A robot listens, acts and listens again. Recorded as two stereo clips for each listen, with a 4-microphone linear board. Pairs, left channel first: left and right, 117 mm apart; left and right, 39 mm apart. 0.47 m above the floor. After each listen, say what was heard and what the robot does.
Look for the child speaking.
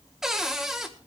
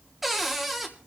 Keep listening.
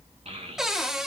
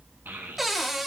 The child speaking: about 65° right or 115° right. Turn 65° right.
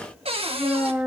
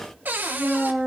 So it is at 15° right. Turn 15° right.
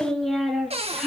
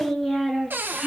Found it: a child speaking, straight ahead.